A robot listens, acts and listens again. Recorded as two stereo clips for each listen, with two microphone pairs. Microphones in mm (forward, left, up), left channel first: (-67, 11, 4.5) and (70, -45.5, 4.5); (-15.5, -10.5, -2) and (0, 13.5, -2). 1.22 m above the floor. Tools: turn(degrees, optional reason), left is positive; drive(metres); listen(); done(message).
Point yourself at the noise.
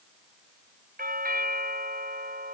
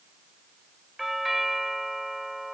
turn(degrees=-30, reason="The doorbell: 30° right.")
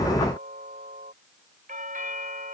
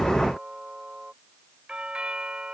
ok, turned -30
done("Facing the doorbell.")